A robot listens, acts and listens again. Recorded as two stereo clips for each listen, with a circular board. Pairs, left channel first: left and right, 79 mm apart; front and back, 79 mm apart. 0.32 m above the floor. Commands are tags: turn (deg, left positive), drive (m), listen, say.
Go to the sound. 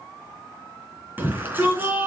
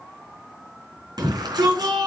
<turn deg="-155"/>
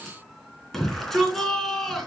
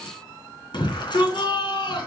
<drive m="1.0"/>
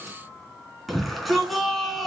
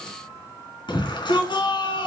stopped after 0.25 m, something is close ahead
<say>Blocked. The shout is further on, straight ahead.</say>